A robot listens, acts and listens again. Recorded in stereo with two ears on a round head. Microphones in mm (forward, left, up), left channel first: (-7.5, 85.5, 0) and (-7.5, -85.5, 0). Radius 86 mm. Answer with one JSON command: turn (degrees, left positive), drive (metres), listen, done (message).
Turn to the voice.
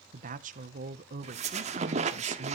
{"turn": -45}
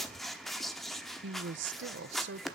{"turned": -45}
{"turn": -85}
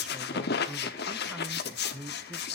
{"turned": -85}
{"done": "Found it: a woman speaking, straight ahead."}